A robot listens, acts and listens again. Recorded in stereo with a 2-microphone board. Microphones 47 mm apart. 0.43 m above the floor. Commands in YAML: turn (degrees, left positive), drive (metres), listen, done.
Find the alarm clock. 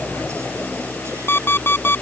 turn: 50
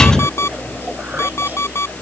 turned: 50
turn: 75
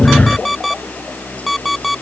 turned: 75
done: "Facing the alarm clock."